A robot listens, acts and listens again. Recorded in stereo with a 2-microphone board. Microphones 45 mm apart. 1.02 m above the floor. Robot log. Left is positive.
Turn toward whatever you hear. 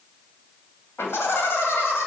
note: The laughter: about 70° left or 110° left.
cmd yaw +70
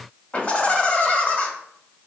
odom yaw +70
note: So it is at 35° left.
cmd yaw +35
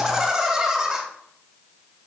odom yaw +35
note: The laughter is now 10° right.
cmd yaw -10
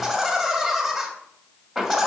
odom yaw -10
end: Facing the laughter.